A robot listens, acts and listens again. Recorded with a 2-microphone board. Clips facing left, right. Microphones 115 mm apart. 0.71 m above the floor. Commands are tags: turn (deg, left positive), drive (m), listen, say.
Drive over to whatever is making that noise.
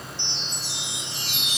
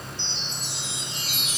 <turn deg="90"/>
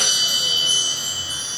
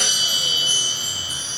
<turn deg="-10"/>
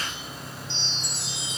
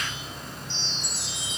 <drive m="1.0"/>
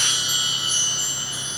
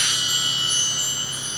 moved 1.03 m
<drive m="1.0"/>
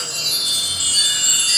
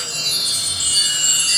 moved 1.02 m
<drive m="1.0"/>
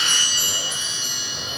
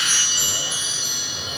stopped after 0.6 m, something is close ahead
<say>I am next to the chime.</say>